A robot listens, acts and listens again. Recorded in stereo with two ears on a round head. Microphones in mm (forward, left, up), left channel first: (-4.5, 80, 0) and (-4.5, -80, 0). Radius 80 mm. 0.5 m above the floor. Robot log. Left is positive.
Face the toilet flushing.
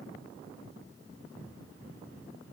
cmd idle
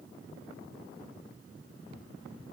cmd idle
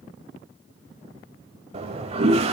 note: The toilet flushing: about 35° right or 145° right.
cmd yaw -35
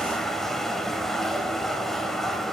end: Found it: a toilet flushing, straight ahead.